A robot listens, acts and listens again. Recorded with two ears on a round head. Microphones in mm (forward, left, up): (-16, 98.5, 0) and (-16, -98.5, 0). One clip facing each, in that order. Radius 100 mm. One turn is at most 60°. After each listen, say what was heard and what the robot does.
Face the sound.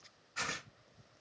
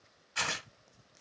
The tearing paper: about 70° right or 110° right. Turn 60° right.
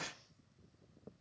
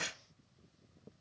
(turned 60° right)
So it is at 35° right. Turn 35° right.
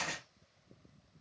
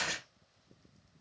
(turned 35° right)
The tearing paper is now 10° right. Turn 10° right.
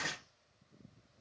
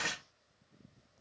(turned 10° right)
Facing the tearing paper, 1 to 2 m away.